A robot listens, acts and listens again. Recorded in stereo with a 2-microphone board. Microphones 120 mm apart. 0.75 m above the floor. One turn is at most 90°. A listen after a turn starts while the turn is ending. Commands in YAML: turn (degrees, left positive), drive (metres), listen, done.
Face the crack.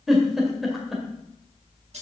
listen: true
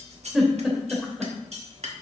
listen: true
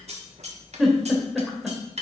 done: "I can't make out a crack to turn to."